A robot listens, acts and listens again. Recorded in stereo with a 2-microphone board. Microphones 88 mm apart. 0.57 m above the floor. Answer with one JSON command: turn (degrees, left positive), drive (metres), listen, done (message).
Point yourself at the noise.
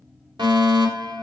{"turn": -55}
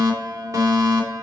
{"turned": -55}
{"turn": -45}
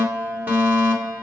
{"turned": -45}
{"turn": -25}
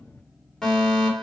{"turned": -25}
{"turn": 10}
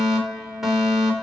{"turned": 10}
{"done": "Facing the fire alarm, 2 to 4 m away."}